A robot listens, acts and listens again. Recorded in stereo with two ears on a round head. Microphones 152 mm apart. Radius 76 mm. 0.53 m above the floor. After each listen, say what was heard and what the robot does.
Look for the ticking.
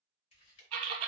Turn 90° left.
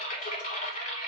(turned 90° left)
Keep listening.
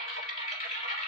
Keep listening.
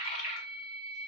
Facing where the ticking came from. I can't hear it now.